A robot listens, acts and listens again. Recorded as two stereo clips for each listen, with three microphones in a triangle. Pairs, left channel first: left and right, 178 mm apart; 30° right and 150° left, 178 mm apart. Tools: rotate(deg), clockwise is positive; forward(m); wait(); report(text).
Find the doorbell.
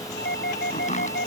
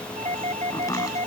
rotate(-100)
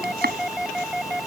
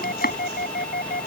report("Found it: a doorbell, straight ahead.")